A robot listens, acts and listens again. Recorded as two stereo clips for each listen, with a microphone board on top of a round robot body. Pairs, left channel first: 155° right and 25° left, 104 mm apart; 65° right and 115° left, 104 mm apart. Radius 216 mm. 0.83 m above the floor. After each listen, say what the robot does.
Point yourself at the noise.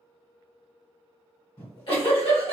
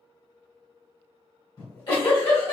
Turn 115° right.
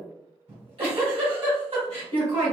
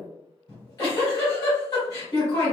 Turn 15° right.
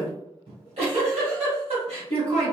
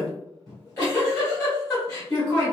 Found it: a giggle, straight ahead.